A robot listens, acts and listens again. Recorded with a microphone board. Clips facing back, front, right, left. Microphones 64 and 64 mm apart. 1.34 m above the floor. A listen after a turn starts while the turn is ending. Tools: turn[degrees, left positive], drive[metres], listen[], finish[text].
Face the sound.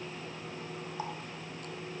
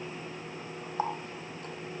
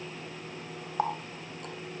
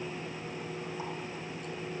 Thought: The running tap: 60° right.
Action: turn[-60]
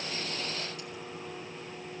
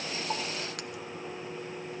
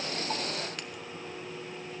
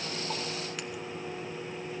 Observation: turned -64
Action: listen[]
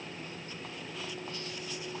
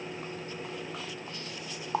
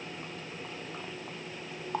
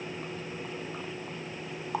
Action: finish[Found it: a running tap, straight ahead, 1 to 2 m away.]